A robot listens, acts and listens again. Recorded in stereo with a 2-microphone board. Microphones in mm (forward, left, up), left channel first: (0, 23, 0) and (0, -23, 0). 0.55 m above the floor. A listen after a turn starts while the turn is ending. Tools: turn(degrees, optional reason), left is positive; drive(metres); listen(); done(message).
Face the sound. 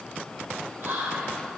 turn(degrees=-55, reason="The whispering: about 55° right or 125° right.")
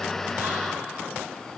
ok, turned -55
listen()
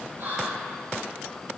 turn(degrees=-65, reason="So it is at 65° right.")
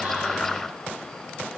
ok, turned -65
listen()
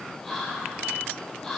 done("Facing the whispering, 1 to 2 m away.")